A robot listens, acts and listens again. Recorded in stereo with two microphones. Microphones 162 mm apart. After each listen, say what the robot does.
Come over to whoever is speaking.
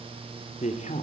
Turn 45° left.
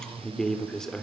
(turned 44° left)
Drive 1.0 m forward.
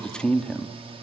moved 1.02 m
Drive 1.0 m forward.
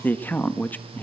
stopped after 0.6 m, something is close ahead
Turn 10° left.
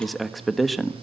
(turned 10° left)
I am next to the man speaking.